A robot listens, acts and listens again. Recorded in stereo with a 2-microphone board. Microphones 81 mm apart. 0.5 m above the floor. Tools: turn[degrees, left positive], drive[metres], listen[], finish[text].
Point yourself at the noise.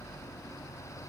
Action: listen[]
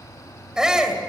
Action: turn[-30]
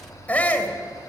Thought: So it is at 20° left.
Action: turn[20]
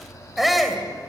Action: finish[Facing the shout.]